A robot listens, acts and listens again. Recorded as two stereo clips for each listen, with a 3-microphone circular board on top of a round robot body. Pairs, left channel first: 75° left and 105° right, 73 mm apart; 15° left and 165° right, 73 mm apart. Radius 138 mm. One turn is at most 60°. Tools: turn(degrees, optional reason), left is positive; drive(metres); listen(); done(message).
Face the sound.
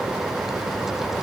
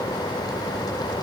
listen()
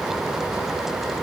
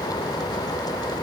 listen()
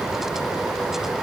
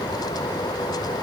done("I can't make out anything to turn to.")